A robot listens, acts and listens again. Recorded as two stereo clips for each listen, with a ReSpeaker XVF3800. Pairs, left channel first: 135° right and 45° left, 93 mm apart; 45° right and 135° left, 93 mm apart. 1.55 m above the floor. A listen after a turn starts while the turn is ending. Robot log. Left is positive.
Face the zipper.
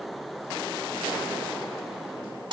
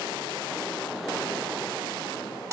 cmd idle
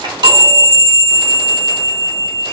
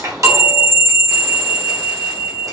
cmd idle
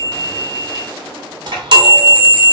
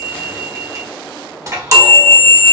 end: I can't make out a zipper, only a chime.